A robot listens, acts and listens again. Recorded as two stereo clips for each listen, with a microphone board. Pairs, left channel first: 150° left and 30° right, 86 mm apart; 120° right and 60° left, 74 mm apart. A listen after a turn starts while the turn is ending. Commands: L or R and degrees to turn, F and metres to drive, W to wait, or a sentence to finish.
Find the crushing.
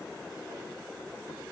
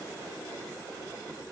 W
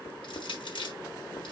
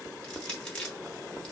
L160
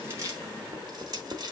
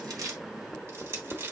Found it: crushing, straight ahead, 2 to 4 m away.